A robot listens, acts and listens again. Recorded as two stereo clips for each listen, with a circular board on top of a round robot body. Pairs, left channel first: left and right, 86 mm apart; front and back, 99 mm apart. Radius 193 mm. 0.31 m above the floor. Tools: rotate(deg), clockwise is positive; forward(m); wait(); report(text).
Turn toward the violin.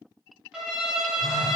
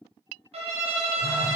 rotate(175)
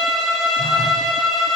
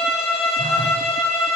report("Facing the violin.")